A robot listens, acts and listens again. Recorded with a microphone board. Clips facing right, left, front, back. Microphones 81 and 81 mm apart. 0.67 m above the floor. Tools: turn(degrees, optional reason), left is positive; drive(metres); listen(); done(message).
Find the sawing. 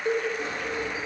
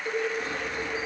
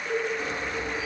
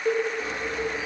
turn(degrees=-40, reason="The sawing: 40° right.")
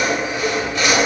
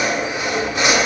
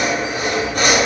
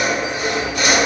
turn(degrees=20, reason="The sawing is now 20° left.")
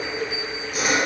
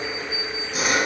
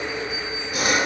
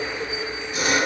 done("Facing the sawing.")